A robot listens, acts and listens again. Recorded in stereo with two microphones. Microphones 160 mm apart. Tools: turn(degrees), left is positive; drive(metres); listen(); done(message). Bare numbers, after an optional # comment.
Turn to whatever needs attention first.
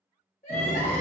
# The crying: about 50° left or 130° left.
turn(50)
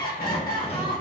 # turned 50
# So it is at 75° left.
turn(75)
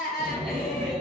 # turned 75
done("Facing the crying, 1 to 2 m away.")